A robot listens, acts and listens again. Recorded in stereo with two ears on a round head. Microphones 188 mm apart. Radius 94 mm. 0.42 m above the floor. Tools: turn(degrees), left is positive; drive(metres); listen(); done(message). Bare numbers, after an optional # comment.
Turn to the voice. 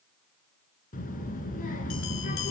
# The child speaking: about 40° left or 140° left.
turn(40)
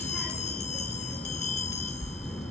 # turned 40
done("Facing the child speaking.")